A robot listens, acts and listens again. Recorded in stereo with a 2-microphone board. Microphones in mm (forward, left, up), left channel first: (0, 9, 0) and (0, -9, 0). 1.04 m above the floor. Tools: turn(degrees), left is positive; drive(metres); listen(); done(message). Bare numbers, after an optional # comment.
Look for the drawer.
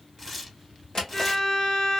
# The drawer: about 45° left or 135° left.
turn(45)
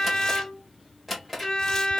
done("Facing the drawer, 1 to 2 m away.")